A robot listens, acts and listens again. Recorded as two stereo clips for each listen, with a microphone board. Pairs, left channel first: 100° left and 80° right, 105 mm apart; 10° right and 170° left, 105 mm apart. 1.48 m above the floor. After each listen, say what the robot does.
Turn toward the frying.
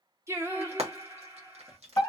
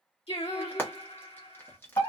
Turn 80° right.
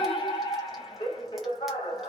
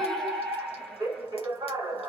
Keep listening.
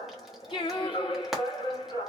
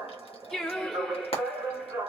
Turn 10° left.
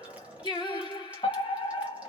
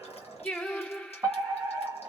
Keep listening.
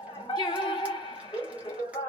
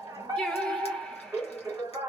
Keep listening.
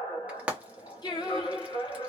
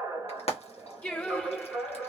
Facing the frying, 1 to 2 m away.